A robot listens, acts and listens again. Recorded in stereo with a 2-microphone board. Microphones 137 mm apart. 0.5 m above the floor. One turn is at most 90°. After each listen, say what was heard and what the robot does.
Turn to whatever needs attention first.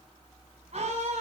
The scream: about 55° right or 125° right. Turn 55° right.
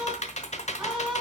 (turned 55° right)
Facing the scream.